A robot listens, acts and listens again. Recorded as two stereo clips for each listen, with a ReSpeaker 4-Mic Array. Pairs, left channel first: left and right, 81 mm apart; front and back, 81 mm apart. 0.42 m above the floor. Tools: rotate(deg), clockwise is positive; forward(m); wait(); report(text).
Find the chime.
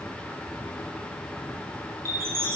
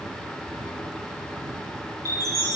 rotate(140)
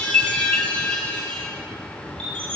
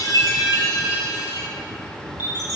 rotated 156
rotate(-15)
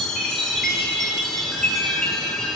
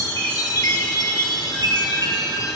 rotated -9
rotate(-10)
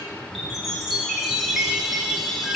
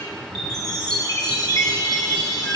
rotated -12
report("Found it: a chime, straight ahead, 1 to 2 m away.")